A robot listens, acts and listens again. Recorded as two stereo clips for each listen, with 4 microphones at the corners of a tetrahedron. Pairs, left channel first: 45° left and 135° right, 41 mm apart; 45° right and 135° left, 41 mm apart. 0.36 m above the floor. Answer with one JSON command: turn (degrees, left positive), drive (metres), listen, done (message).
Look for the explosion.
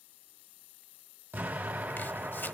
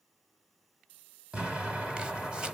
{"turn": -160}
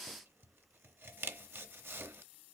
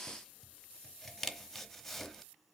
{"done": "I heard an explosion from this way, but can't make it out now."}